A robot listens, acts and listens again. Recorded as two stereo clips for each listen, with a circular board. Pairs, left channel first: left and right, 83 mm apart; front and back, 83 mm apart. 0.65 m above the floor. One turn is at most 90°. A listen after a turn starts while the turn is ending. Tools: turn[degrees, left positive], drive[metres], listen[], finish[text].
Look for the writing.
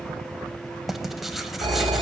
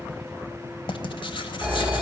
Action: finish[Facing the writing.]